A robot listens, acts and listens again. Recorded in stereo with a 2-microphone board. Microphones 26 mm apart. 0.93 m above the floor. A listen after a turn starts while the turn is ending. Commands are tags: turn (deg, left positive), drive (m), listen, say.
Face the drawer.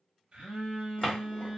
<turn deg="30"/>
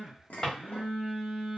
<turn deg="150"/>
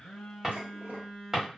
<turn deg="-20"/>
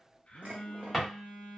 <say>Found it: a drawer, straight ahead.</say>